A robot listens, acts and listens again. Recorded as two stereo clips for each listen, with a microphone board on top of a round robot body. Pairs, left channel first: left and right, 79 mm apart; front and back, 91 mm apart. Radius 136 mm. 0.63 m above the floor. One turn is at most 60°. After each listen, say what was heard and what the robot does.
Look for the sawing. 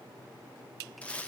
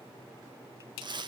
Keep listening.
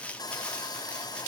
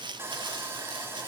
The sawing: 120° left. Turn 60° left.
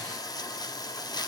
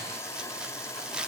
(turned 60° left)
The sawing is now 55° left. Turn 55° left.
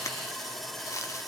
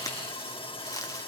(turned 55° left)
Found it: sawing, straight ahead.